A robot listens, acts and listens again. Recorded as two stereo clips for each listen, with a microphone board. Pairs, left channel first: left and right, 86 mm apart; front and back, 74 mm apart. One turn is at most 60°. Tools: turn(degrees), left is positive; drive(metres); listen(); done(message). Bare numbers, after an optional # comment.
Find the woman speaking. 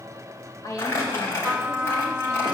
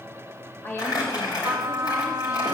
# The woman speaking: 50° left.
turn(50)
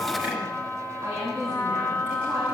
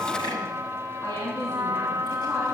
# The woman speaking is now 40° right.
turn(-40)
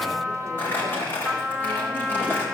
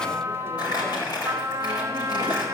listen()
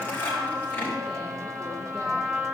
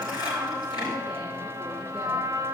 listen()
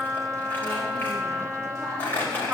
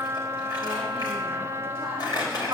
done("I heard a woman speaking from this way, but can't make it out now.")